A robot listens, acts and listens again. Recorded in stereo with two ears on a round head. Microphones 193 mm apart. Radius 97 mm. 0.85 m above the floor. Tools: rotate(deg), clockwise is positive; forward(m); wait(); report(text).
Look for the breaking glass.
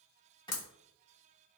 rotate(-75)
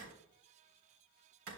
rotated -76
wait()
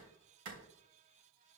report("I heard breaking glass, but can't make it out now. It was about 5° right or 30° left.")